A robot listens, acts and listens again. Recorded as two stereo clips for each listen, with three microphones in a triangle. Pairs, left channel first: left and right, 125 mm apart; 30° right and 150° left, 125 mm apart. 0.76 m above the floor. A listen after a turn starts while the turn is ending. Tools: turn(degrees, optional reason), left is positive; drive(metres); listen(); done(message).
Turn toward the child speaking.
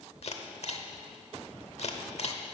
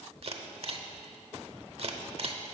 listen()
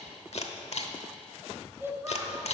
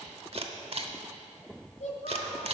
turn(degrees=-25, reason="The child speaking: 25° right.")
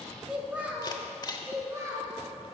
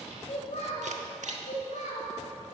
turn(degrees=-25, reason="The child speaking is now 25° right.")
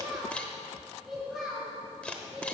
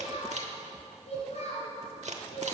done("Found it: a child speaking, straight ahead, 2 to 4 m away.")